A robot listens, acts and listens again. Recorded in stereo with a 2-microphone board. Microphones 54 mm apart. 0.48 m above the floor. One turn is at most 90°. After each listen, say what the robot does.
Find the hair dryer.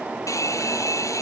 Turn 65° left.
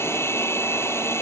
Turn 50° left.
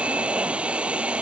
Turn 20° right.
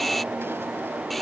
Facing the hair dryer.